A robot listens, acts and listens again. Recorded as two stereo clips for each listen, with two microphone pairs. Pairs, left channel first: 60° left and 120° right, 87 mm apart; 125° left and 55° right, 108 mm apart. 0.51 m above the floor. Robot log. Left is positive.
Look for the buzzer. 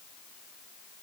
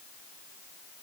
cmd idle
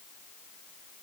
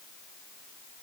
cmd idle
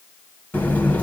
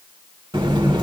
note: The buzzer: 15° right.
cmd yaw -15
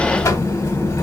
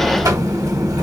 end: Found it: a buzzer, straight ahead, under 1 m away.